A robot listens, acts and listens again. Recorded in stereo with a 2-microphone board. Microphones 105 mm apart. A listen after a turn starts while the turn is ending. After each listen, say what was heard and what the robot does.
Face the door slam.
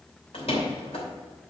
The door slam: about 70° left or 110° left. Turn 70° left.
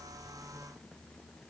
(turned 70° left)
Keep listening.
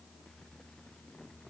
I heard a door slam, but can't make it out now. It was about straight ahead or 40° left.